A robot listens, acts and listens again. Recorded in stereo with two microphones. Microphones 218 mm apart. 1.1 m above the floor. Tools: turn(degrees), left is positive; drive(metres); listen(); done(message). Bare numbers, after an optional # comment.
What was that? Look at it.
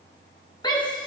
# The shout: about 20° left or 160° left.
turn(20)
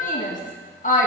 # So it is at 140° left.
turn(140)
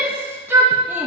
# The shout is now 10° right.
turn(-10)
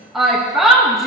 done("Facing the shout.")